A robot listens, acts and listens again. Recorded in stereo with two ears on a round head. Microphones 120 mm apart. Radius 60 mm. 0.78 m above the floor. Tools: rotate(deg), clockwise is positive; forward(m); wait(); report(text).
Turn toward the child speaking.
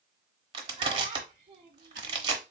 rotate(45)
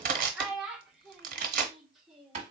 report("Found it: a child speaking, straight ahead.")